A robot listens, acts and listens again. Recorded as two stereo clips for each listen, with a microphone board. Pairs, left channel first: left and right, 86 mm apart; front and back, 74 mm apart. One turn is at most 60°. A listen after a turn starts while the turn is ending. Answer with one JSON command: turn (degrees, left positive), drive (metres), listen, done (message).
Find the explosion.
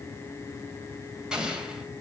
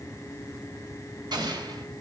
{"turn": -60}
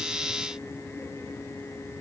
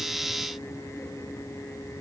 {"turn": -60}
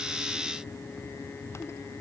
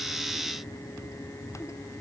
{"turn": -50}
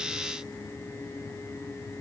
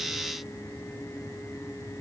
{"done": "I heard an explosion from this way, but can't make it out now."}